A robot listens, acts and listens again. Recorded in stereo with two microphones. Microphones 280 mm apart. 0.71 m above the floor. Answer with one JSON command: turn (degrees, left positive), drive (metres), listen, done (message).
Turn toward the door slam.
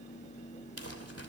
{"listen": true}
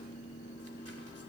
{"listen": true}
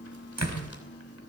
{"turn": -70}
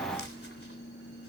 {"listen": true}
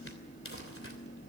{"done": "I heard a door slam, but can't make it out now. It was about straight ahead or 40° right."}